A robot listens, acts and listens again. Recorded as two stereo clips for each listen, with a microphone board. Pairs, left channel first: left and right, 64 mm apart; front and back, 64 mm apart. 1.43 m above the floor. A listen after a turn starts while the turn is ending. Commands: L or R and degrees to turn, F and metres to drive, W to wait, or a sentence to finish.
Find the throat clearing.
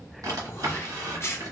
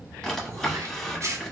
L135
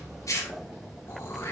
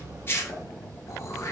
L40
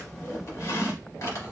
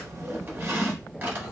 W
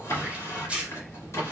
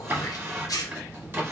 R20
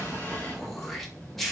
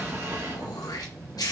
Found it: throat clearing, straight ahead.